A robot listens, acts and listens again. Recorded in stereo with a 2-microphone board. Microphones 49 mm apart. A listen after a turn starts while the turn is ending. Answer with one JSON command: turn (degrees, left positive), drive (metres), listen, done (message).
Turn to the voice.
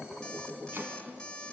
{"listen": true}
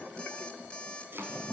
{"listen": true}
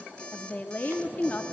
{"turn": 30}
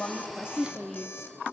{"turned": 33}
{"done": "Facing the woman speaking."}